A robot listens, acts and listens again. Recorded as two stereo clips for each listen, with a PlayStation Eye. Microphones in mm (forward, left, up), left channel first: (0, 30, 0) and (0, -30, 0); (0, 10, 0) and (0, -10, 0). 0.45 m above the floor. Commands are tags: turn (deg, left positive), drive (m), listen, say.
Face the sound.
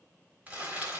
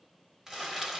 <turn deg="-30"/>
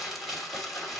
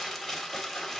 <say>Facing the crumpling.</say>